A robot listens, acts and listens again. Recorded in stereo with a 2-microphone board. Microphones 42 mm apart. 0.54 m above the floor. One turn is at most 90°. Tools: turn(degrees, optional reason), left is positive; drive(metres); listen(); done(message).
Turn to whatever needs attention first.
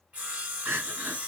turn(degrees=-70, reason="The crying: about 70° right or 110° right.")
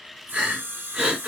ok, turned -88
turn(degrees=-20, reason="So it is at 20° right.")
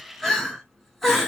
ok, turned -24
done("Facing the crying, 1 to 2 m away.")